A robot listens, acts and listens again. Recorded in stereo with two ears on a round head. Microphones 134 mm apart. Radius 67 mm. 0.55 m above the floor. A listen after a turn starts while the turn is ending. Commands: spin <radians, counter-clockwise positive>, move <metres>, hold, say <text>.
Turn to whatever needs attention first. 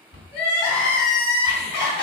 spin 0.61
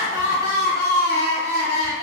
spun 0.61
spin 1.92
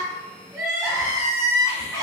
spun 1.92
spin -0.35
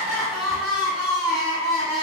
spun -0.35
say Found it: crying, straight ahead.